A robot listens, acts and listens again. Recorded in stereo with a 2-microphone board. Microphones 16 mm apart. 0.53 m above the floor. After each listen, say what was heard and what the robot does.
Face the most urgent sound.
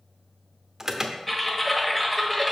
The alarm: about 30° right or 150° right. Turn 30° right.
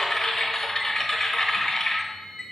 Keep listening.
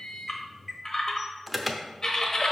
Found it: an alarm, straight ahead.